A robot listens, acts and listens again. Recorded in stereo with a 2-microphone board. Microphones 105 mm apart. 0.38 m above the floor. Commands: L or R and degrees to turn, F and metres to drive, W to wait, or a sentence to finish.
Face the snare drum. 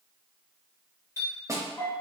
R30
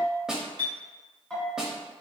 Found it: a snare drum, straight ahead, under 1 m away.